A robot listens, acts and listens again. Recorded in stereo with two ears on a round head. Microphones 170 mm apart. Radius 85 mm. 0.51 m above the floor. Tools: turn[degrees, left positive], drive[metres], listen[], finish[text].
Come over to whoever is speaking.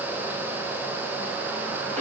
Action: listen[]
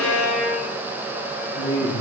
Thought: The man speaking: about 35° left or 145° left.
Action: turn[35]
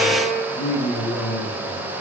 Thought: So it is at 105° left.
Action: turn[105]
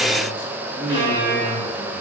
Action: listen[]
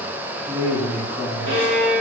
Thought: The man speaking is now 10° right.
Action: turn[-10]
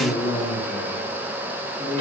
Action: drive[1.0]
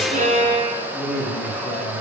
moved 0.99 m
Action: drive[1.0]
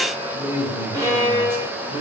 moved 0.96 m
Thought: The man speaking is now 15° right.
Action: turn[-15]
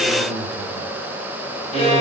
Action: drive[1.0]
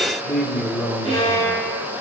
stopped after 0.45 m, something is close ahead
Action: finish[Arrived at the man speaking, straight ahead.]